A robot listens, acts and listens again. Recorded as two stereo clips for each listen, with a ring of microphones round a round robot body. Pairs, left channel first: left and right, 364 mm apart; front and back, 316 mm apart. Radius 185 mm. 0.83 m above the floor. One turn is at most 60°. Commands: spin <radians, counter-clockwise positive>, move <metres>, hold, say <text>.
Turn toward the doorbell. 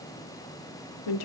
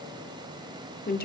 hold
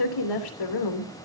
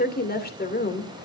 hold
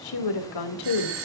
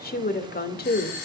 spin -0.61
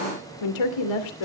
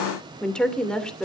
hold
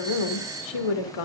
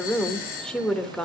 spin -0.17
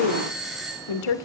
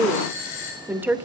say Found it: a doorbell, straight ahead.